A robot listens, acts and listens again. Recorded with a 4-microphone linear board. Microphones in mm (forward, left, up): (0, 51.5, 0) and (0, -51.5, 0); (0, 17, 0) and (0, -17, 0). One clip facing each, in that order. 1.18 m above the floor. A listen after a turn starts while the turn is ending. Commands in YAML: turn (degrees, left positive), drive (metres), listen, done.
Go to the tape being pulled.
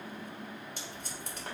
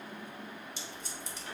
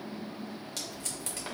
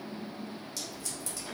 turn: 50
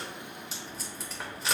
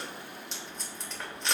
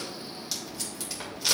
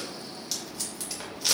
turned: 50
drive: 1.0
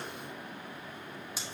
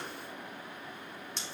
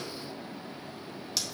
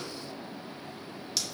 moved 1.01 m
drive: 1.0
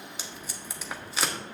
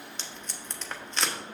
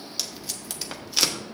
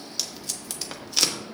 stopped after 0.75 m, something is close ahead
done: "I am next to the tape being pulled."